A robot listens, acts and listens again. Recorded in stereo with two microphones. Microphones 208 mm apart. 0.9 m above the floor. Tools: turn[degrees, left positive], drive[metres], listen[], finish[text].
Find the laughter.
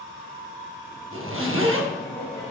Thought: The laughter: about 20° left or 160° left.
Action: turn[20]
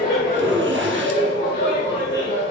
Thought: So it is at 115° left.
Action: turn[115]
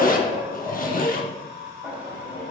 Action: finish[Facing the laughter.]